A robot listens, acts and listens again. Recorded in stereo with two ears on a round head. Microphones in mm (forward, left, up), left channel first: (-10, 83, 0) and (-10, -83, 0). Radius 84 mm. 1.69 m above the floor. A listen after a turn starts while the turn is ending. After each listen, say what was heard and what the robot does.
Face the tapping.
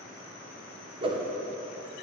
Keep listening.
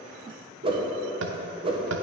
The tapping: about 70° right or 110° right. Turn 70° right.
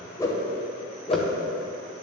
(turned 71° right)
Keep listening.
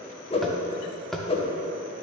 Found it: tapping, straight ahead.